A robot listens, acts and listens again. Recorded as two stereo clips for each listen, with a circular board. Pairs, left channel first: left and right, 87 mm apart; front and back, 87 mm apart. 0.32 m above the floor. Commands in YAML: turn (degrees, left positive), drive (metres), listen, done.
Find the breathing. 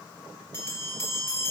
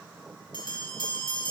listen: true
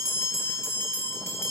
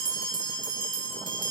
listen: true
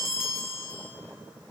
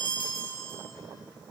done: "I can't make out breathing, only a bell."